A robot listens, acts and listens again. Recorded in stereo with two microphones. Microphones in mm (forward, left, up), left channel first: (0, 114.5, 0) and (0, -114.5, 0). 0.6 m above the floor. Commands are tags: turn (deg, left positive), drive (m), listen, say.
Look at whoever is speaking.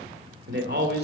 <turn deg="-45"/>
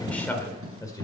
<turn deg="15"/>
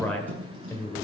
<turn deg="15"/>
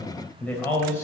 <turn deg="10"/>
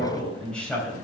<say>Found it: a man speaking, straight ahead, 2 to 4 m away.</say>